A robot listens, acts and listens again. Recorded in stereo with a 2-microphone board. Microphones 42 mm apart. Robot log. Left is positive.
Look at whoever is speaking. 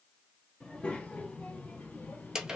note: The child speaking: about 55° left or 125° left.
cmd yaw +55
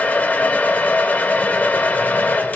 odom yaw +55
cmd idle
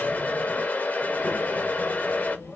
note: So it is at 65° left.
cmd yaw +65
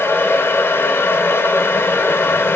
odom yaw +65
cmd idle
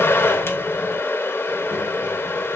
cmd idle
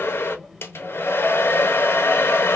end: Found it: a child speaking, straight ahead.